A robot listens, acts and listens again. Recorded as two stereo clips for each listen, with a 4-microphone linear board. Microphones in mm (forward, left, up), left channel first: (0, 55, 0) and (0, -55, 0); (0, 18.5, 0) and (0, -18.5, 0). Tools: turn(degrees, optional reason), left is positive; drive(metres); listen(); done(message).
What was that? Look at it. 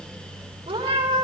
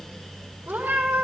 turn(degrees=-50, reason="The cat meowing: about 50° right or 130° right.")
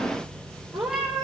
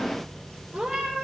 done("Facing the cat meowing, 2 to 4 m away.")